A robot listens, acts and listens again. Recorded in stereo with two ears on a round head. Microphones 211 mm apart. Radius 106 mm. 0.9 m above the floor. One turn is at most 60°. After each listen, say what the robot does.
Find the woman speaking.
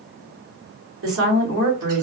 Turn 60° right.
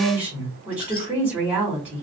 Turn 10° right.
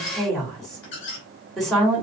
Facing the woman speaking, 2 to 4 m away.